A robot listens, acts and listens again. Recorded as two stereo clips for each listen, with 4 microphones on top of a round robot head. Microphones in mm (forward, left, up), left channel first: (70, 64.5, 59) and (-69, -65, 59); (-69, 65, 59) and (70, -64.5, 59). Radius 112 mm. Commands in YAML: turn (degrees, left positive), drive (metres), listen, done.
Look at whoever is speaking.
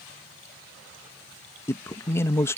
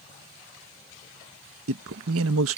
turn: -35
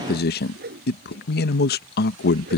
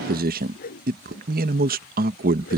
done: "Found it: a man speaking, straight ahead."